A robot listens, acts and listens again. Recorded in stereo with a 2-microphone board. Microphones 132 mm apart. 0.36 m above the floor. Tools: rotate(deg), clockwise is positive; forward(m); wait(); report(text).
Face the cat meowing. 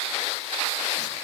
wait()
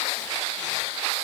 wait()
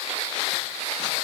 report("I can't make out a cat meowing.")